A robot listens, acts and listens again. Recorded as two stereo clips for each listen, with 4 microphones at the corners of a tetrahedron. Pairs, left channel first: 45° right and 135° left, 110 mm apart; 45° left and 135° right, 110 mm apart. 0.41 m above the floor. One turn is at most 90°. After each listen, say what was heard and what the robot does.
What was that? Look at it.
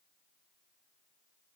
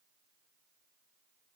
Keep listening.
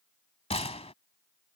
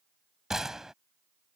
The gunshot: 50° right. Turn 50° right.
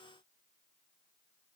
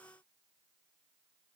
I heard a gunshot from this way, but can't make it out now.